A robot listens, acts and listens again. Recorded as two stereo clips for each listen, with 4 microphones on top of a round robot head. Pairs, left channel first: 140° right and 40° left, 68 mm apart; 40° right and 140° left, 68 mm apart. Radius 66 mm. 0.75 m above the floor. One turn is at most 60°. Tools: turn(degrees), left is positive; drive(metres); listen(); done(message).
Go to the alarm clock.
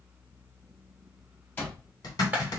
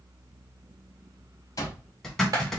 turn(degrees=-60)
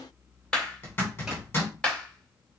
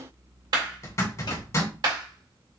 turn(degrees=-20)
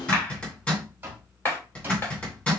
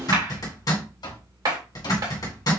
turn(degrees=-25)
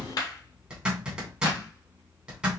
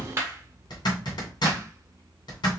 drive(metres=1.0)
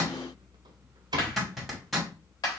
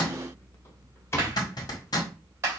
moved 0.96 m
turn(degrees=15)
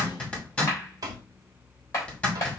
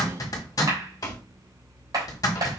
drive(metres=1.0)
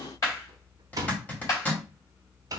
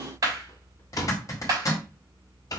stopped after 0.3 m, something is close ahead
done("Arrived at the alarm clock, straight ahead.")